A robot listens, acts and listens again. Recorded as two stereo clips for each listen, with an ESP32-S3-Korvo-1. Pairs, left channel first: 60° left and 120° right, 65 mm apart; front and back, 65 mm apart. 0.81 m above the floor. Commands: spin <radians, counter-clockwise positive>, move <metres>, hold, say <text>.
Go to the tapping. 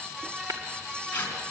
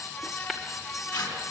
spin -1.57
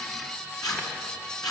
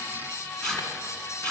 hold
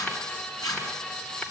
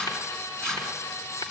hold
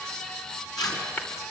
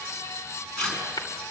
move 1.0
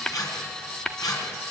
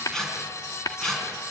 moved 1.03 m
spin -0.35
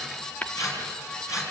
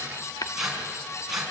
move 1.0
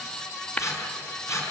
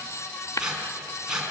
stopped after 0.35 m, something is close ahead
say Arrived at the tapping, straight ahead.